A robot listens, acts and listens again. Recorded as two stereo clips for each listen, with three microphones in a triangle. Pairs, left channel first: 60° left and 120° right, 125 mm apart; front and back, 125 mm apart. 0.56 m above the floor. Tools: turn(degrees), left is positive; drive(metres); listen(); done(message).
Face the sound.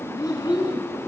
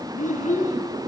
done("Facing the child speaking.")